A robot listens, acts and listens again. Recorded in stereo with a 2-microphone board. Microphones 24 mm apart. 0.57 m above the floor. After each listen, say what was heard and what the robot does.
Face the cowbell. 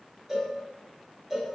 The cowbell: about 20° right or 160° right. Turn 20° right.
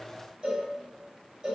So it is at 140° right. Turn 140° right.
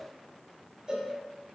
The cowbell is now 30° right. Turn 30° right.
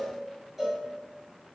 The cowbell is now 10° right. Turn 10° right.
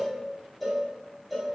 Found it: a cowbell, straight ahead, 1 to 2 m away.